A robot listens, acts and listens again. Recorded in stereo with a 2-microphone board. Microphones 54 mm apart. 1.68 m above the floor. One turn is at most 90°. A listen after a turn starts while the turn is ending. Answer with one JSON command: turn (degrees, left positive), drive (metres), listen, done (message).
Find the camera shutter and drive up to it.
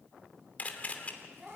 {"turn": 30}
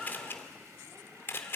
{"turn": 90}
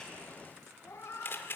{"turn": 60}
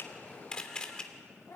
{"turn": 20}
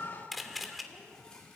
{"drive": 1.0}
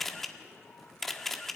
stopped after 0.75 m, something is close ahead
{"turn": 10}
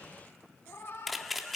{"done": "I am next to the camera shutter."}